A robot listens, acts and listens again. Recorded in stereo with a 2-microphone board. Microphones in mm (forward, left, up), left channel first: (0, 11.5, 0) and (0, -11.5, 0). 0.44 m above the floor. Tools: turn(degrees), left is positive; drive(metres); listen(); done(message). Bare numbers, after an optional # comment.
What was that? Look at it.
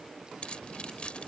# The keys jangling: about 50° left or 130° left.
turn(50)
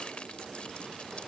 listen()
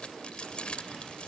# So it is at 70° left.
turn(70)
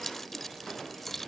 # The keys jangling is now 20° left.
turn(20)
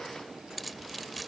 done("Found it: keys jangling, straight ahead.")